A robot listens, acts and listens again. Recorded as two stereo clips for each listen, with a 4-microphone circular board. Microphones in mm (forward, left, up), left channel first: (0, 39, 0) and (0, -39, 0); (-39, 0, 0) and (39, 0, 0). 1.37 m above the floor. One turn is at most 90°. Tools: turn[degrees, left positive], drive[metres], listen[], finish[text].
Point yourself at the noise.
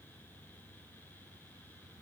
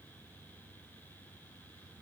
Action: listen[]
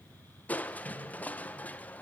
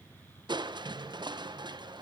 Thought: The crushing: 20° left.
Action: turn[20]
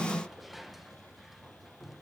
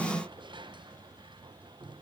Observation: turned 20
Action: finish[Found it: crushing, straight ahead.]